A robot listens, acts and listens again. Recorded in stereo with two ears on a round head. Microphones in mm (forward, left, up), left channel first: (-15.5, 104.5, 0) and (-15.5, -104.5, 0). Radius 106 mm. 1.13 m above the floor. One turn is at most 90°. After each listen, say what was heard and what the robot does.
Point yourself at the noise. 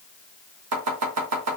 Turn 90° right.
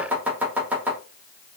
Found it: chopping, straight ahead, 1 to 2 m away.